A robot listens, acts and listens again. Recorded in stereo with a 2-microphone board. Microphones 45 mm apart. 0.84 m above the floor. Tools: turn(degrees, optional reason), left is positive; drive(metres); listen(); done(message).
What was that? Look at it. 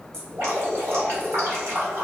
turn(degrees=-90)
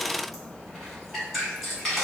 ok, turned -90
done("Facing the dripping, 1 to 2 m away.")